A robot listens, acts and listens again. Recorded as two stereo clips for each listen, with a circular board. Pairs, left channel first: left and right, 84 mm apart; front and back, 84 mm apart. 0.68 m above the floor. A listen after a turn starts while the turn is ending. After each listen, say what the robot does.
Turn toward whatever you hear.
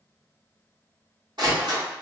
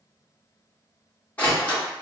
Turn 70° right.
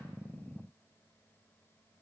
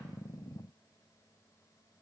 Facing where the door slam came from. I can't hear it now.